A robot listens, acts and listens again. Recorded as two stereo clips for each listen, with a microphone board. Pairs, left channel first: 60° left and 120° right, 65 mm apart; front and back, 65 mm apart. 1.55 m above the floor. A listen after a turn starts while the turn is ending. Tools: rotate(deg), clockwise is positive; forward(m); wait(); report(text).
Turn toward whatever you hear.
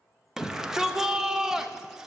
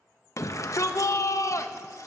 rotate(40)
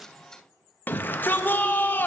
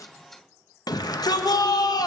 report("Facing the shout, under 1 m away.")